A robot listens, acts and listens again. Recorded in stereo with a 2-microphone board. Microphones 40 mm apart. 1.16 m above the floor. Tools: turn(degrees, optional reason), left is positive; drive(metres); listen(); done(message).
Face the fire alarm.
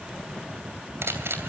listen()
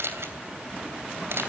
listen()
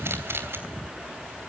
done("I can't make out a fire alarm, only a camera shutter.")